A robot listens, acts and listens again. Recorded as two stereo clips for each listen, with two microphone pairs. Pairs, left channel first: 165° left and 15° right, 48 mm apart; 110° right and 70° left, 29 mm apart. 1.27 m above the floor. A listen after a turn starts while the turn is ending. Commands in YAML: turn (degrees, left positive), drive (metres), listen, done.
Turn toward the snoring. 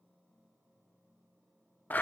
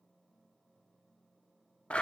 listen: true
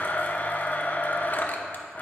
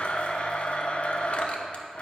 listen: true
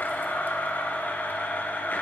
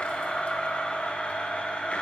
done: "I can't make out snoring to turn to."